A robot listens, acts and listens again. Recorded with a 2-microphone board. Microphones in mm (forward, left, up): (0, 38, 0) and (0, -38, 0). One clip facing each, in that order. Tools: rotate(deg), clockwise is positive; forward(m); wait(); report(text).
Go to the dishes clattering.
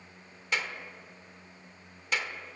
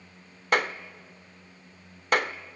wait()
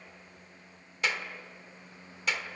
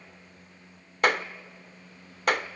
wait()
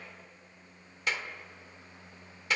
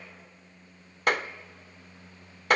report("I can't make out dishes clattering to turn to.")